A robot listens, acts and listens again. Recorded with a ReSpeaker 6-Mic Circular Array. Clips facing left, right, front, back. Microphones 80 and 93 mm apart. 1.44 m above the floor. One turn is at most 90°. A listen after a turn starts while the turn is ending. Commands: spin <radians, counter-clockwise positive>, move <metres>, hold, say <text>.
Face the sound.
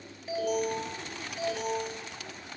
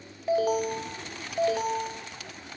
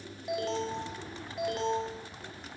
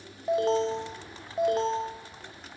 spin -1.57
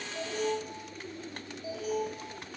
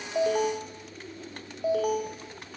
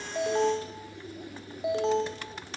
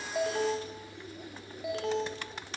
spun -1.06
spin -1.13
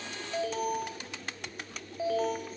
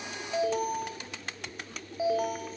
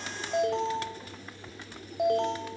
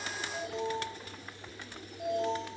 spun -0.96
spin -0.17
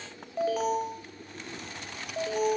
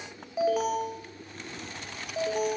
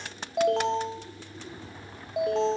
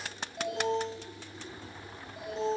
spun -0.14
say Facing the alarm.